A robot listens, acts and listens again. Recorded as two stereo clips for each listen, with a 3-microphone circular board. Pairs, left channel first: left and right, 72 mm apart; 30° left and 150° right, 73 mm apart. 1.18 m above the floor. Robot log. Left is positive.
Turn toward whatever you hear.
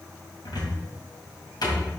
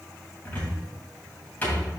note: The cupboard door: 100° left.
cmd yaw +100
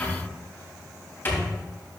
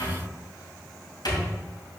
note: The cupboard door is now 30° left.
cmd yaw +30
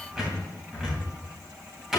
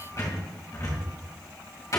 end: Found it: a cupboard door, straight ahead, 2 to 4 m away.